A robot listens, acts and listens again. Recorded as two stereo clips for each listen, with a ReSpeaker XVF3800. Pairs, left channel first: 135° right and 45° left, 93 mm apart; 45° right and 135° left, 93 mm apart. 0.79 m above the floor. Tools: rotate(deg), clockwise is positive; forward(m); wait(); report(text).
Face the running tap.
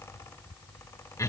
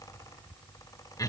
wait()
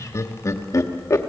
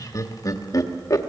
wait()
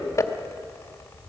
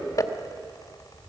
report("I can't make out a running tap to turn to.")